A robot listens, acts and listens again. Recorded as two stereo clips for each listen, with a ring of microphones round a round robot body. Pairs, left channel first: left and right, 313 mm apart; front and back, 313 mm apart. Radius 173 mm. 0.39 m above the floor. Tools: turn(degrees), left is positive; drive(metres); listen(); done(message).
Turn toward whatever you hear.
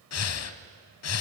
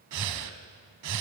turn(degrees=135)
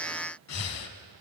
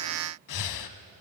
turn(degrees=40)
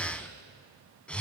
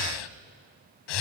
done("Found it: breathing, straight ahead, under 1 m away.")